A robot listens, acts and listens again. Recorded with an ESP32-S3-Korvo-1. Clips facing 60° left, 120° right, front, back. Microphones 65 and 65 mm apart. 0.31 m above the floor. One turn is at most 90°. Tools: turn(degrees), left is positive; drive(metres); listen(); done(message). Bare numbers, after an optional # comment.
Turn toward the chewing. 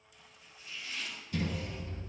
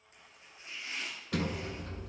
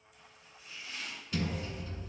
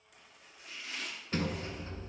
listen()
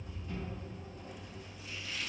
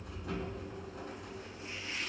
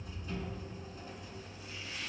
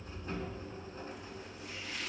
listen()
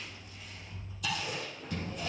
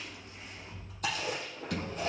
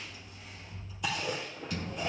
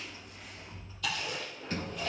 # The chewing: 70° right.
turn(-70)
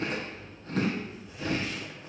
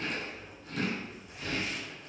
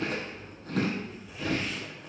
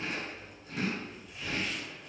# The chewing is now 15° left.
turn(15)
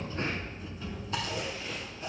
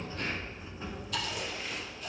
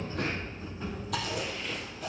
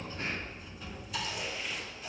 done("Facing the chewing.")